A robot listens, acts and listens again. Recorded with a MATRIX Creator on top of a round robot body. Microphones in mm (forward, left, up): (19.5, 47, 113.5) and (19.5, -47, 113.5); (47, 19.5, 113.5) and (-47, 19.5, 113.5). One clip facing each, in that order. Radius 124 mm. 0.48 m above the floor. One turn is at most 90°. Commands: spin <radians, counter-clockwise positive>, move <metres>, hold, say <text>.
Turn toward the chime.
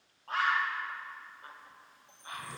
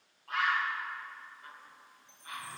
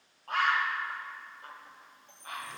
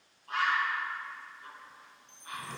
spin -0.61
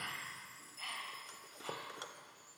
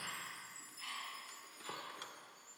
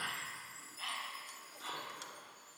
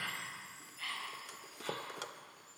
spin -0.17
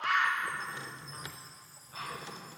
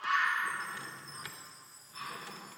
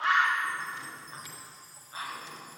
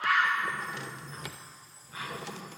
say Facing the chime, 2 to 4 m away.